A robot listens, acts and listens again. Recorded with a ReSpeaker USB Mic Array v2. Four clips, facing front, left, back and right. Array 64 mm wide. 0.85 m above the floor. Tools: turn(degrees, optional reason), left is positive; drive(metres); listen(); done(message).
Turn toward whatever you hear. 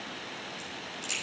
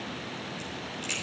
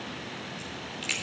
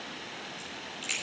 turn(degrees=-175, reason="The crack: 175° right.")
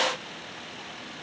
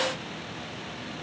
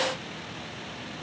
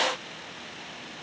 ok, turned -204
turn(degrees=30, reason="Nothing new. It was at 30° left.")
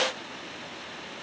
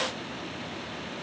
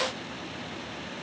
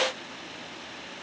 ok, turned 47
turn(degrees=-20, reason="Nothing new. It was at 20° right.")
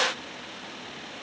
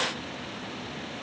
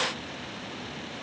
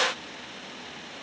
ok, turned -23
done("I heard a crack from this way, but can't make it out now.")